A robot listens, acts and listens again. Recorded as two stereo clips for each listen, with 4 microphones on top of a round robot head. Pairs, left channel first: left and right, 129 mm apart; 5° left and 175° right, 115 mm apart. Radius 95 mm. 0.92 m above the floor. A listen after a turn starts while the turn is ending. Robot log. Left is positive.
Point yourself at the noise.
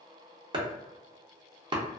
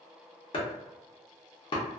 note: The chopping: 40° right.
cmd yaw -40
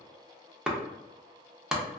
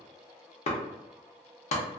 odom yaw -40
end: Found it: chopping, straight ahead, under 1 m away.